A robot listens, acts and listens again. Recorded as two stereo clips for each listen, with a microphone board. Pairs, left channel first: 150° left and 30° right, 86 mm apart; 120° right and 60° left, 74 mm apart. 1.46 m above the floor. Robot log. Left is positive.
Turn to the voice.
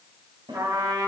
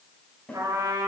cmd idle
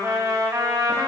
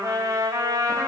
cmd idle
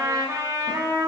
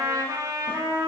end: I can't make out anyone speaking, only a snare drum and a trumpet.